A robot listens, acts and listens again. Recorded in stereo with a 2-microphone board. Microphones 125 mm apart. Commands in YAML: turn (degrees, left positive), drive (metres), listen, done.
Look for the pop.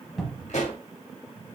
turn: 70
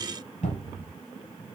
listen: true
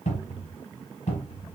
done: "I heard a pop, but can't make it out now. It was about straight ahead or 40° left."